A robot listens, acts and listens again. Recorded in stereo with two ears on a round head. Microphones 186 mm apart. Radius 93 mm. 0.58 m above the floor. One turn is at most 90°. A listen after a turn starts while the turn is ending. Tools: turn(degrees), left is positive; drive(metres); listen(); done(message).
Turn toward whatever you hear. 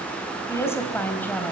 turn(degrees=30)
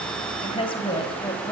turn(degrees=20)
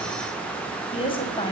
turn(degrees=90)
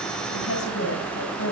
turn(degrees=75)
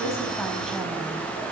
listen()
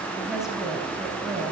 done("Found it: a woman speaking, straight ahead.")